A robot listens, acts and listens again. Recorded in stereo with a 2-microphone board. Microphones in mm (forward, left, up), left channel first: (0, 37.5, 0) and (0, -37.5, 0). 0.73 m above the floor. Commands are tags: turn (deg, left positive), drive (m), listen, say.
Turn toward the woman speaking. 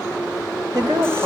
<turn deg="-60"/>
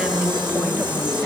<listen/>
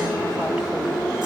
<listen/>
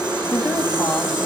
<turn deg="-10"/>
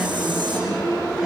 <listen/>
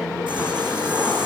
<listen/>
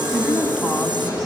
<say>Facing the woman speaking.</say>